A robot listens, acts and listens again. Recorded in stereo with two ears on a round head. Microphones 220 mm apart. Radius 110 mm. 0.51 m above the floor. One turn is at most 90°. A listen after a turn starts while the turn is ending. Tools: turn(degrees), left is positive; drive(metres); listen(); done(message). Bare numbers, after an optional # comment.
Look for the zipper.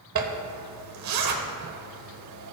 # The zipper: about 75° right or 105° right.
turn(-75)
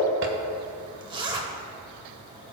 # So it is at 20° right.
turn(-20)
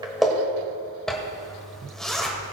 done("Facing the zipper.")